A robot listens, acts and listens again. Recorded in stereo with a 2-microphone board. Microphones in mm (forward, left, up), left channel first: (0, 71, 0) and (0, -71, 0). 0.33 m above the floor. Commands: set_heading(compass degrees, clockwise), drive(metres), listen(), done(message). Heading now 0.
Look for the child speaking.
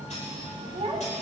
set_heading(50)
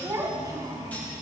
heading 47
set_heading(72)
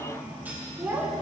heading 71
set_heading(86)
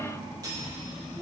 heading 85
listen()
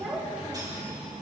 done("Found it: a child speaking, straight ahead.")